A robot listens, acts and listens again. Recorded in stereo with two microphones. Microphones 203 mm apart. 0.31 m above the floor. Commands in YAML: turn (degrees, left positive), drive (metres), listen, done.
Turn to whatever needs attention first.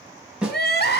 turn: 50
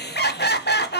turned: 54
turn: 65
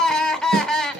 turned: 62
done: "Found it: crying, straight ahead."